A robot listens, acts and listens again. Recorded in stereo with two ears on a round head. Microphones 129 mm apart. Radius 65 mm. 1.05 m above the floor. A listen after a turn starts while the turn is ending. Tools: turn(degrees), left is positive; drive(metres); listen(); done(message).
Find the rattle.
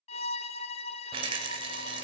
turn(degrees=-40)
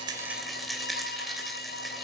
done("Found it: a rattle, straight ahead, 2 to 4 m away.")